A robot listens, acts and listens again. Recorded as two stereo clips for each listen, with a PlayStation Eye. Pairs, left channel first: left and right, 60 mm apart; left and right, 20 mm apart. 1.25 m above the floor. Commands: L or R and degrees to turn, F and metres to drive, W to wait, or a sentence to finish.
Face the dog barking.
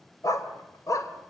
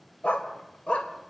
L90
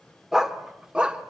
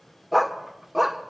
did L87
R20
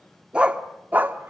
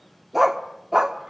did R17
R35
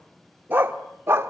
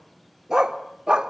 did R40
R40
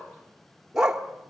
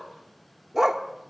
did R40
R10
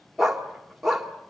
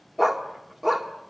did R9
Facing the dog barking, 1 to 2 m away.